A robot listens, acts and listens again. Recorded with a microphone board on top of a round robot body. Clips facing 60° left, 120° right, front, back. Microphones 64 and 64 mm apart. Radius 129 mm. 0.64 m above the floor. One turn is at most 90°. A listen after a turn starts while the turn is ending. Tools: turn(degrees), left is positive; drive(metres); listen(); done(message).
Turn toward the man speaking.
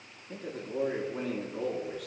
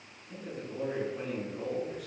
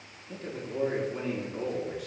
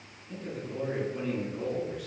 turn(degrees=50)
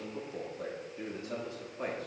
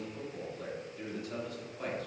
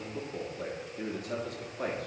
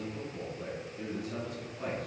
done("Facing the man speaking.")